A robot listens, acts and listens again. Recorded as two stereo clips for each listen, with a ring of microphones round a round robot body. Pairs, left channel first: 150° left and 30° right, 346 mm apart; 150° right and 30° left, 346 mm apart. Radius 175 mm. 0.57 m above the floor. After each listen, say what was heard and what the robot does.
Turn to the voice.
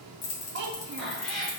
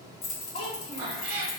The child speaking: 75° right. Turn 75° right.
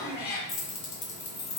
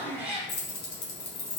Keep listening.
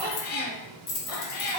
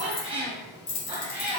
Keep listening.
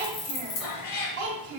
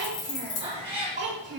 The child speaking is now 30° right. Turn 30° right.
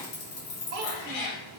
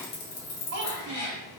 The child speaking is now 10° right. Turn 10° right.
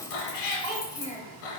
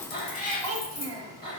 Facing the child speaking, 1 to 2 m away.